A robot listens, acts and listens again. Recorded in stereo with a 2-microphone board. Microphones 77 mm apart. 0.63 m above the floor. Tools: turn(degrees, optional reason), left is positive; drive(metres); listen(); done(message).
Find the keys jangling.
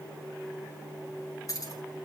turn(degrees=50, reason="The keys jangling: about 50° left or 130° left.")
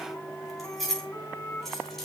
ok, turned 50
done("Found it: keys jangling, straight ahead.")